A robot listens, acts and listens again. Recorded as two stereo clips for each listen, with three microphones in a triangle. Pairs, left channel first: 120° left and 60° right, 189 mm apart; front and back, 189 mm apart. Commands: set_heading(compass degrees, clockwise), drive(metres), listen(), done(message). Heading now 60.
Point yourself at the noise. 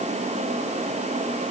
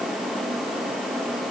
listen()
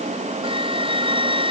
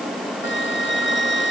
done("Facing the flute.")